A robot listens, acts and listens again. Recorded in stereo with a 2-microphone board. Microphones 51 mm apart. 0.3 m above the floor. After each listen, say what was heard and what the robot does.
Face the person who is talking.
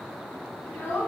The child speaking: about 45° left or 135° left. Turn 45° left.
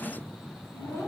So it is at 85° left. Turn 85° left.
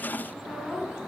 Found it: a child speaking, straight ahead.